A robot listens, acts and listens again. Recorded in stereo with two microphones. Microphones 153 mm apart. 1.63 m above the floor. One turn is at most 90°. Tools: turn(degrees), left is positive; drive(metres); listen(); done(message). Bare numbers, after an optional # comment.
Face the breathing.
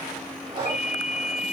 # The breathing: about 35° right or 145° right.
turn(-35)
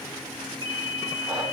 listen()
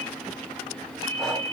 listen()
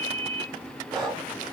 done("Facing the breathing.")